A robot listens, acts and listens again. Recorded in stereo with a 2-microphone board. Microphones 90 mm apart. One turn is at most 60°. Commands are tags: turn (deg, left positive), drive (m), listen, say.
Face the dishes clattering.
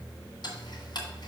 <listen/>
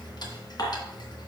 <turn deg="45"/>
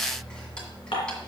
<turn deg="60"/>
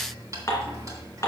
<turn deg="35"/>
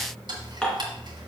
<turn deg="10"/>
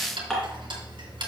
<say>Facing the dishes clattering, 2 to 4 m away.</say>